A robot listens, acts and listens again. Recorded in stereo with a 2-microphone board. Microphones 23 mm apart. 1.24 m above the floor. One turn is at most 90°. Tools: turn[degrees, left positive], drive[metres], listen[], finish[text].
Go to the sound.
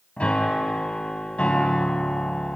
Action: turn[90]
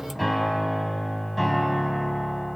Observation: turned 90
Action: drive[1.0]
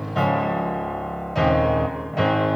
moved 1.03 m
Thought: The piano is now 10° left.
Action: turn[10]
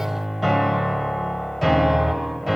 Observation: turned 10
Action: drive[1.0]
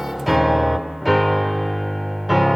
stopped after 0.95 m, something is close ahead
Action: finish[I am next to the piano.]